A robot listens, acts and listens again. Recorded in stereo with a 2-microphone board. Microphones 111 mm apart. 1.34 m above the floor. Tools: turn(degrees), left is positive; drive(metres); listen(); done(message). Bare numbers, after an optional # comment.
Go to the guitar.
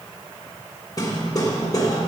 listen()
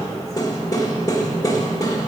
listen()
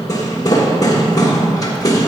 done("I can't make out a guitar, only hammering.")